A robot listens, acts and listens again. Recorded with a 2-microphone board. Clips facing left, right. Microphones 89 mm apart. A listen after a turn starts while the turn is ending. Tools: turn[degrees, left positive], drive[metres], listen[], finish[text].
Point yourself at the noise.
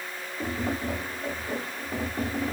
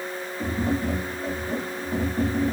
Action: turn[30]
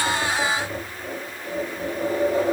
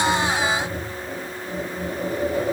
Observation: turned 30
Thought: So it is at 135° left.
Action: turn[135]
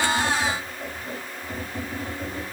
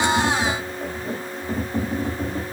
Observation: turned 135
Thought: The tapping is now 30° right.
Action: turn[-30]
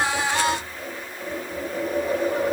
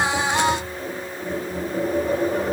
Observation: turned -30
Action: finish[Facing the tapping, 1 to 2 m away.]